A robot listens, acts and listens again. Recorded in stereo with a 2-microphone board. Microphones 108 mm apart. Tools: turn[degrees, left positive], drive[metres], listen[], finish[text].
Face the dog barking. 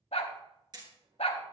Action: turn[90]
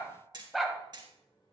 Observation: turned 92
Action: finish[Found it: a dog barking, straight ahead.]